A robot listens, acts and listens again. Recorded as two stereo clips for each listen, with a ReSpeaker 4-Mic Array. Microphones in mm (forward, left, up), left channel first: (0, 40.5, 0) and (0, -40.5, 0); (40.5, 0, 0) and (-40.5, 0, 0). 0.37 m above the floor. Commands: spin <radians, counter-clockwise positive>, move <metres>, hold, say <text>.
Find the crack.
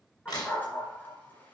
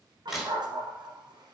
spin 1.66
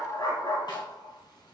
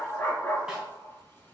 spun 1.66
say I heard a crack from this way, but can't make it out now.